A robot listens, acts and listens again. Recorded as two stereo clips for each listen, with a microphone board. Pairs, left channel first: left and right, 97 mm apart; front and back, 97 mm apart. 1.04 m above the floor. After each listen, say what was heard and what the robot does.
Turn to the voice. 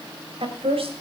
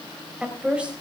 The woman speaking: 100° right. Turn 100° right.
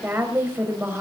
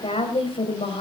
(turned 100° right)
The woman speaking is now 20° right. Turn 20° right.
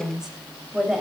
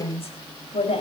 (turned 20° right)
Facing the woman speaking.